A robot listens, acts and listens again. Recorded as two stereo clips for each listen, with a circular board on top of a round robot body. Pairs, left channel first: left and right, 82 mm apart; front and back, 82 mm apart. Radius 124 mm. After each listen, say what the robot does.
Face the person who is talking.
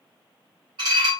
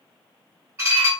Keep listening.
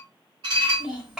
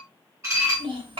Turn 170° right.
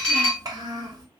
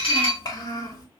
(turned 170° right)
Turn 45° right.
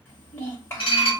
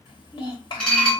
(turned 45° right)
Turn 30° left.
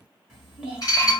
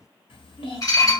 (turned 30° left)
Found it: a child speaking, straight ahead.